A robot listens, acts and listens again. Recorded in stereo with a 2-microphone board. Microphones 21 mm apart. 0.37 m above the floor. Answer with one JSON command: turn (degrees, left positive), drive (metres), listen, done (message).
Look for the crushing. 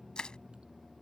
{"turn": 50}
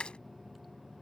{"turn": 80}
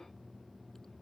{"listen": true}
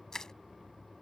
{"turn": 35}
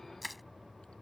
{"done": "Facing the crushing."}